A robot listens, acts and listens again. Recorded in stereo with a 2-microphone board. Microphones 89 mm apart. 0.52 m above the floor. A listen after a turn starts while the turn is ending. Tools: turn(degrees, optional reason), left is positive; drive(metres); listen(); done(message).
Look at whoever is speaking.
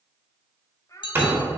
turn(degrees=35, reason="The child speaking: about 35° left or 145° left.")
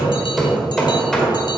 listen()
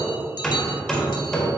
listen()
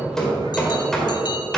done("I heard a child speaking, but can't make it out now. It was about straight ahead or 110° left.")